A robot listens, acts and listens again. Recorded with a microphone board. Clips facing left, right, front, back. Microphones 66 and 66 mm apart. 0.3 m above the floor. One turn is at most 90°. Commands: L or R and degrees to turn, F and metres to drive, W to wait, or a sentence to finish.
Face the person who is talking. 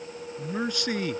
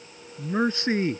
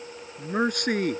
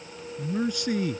R30
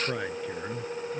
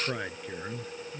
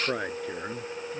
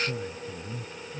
Facing the man speaking.